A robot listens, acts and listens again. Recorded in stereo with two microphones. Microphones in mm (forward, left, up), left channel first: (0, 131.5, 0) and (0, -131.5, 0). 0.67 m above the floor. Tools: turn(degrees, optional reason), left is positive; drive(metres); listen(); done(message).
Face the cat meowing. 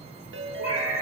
turn(degrees=70, reason="The cat meowing: about 70° left or 110° left.")
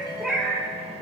turn(degrees=-10, reason="So it is at 10° right.")
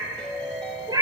turn(degrees=-15, reason="The cat meowing is now 15° right.")
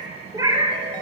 turn(degrees=-20, reason="The cat meowing is now 20° right.")
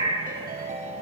turn(degrees=-20, reason="The cat meowing is now 20° right.")
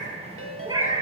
turn(degrees=-15, reason="The cat meowing is now 15° right.")
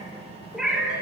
done("Facing the cat meowing, 1 to 2 m away.")